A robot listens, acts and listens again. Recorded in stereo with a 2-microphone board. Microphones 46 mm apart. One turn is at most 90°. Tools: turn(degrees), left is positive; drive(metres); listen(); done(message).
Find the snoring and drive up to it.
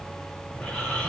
turn(degrees=25)
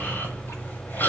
turn(degrees=90)
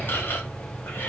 turn(degrees=50)
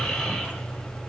turn(degrees=10)
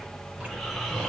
drive(metres=1.0)
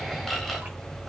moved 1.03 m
drive(metres=1.0)
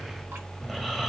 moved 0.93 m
drive(metres=1.0)
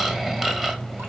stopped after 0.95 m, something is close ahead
turn(degrees=-10)
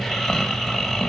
done("Arrived at the snoring, straight ahead.")